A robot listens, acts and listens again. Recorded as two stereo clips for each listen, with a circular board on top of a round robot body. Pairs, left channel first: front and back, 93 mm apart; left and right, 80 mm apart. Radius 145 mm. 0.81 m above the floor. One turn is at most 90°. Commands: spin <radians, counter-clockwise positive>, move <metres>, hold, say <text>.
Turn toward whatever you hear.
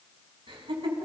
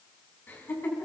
spin 1.57
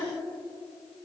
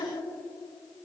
spin 1.05
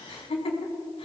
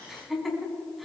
say Found it: laughter, straight ahead, over 4 m away.